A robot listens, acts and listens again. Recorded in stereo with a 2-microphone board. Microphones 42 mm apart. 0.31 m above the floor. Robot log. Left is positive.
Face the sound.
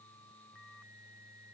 cmd idle
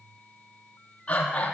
note: The breathing: about 30° left or 150° left.
cmd yaw +30
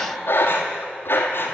note: So it is at 120° left.
cmd yaw +120
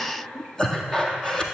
note: The breathing is now 10° left.
cmd yaw +10
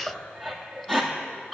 end: Facing the breathing.